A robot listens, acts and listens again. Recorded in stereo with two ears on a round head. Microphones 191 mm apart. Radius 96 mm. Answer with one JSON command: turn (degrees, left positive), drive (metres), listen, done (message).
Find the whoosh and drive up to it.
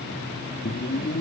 {"turn": 45}
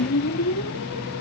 {"turn": 90}
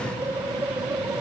{"turn": -10}
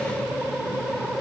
{"drive": 1.0}
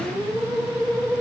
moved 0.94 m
{"drive": 1.0}
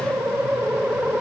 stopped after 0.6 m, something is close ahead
{"done": "Arrived at the whoosh, straight ahead."}